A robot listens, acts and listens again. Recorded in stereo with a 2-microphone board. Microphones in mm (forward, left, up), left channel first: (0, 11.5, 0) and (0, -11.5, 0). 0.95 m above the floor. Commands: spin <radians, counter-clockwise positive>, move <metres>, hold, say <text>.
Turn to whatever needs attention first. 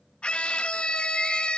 spin 0.96
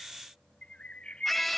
say Found it: a scream, straight ahead.